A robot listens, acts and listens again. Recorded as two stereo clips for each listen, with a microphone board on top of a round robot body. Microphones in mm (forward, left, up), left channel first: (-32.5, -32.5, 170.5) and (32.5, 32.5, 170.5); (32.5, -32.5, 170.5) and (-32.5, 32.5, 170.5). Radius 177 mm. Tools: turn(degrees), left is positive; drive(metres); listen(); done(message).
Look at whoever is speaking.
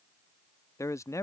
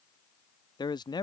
turn(degrees=-80)
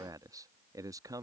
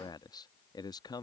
done("Facing the man speaking.")